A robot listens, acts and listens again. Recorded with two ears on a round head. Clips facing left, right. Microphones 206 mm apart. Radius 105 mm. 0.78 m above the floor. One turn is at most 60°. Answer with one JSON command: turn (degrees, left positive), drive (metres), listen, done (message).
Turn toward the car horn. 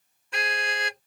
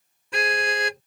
{"turn": -60}
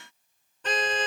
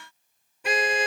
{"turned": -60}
{"turn": -10}
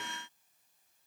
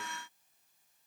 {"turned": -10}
{"listen": true}
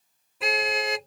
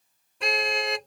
{"done": "Found it: a car horn, straight ahead."}